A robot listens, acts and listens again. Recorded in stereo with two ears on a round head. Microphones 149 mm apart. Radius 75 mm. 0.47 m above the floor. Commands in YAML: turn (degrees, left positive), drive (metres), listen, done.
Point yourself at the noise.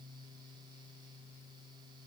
listen: true
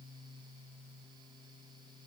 listen: true
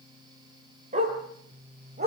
turn: -45
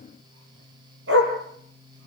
turn: -90
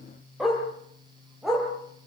done: "Facing the dog barking."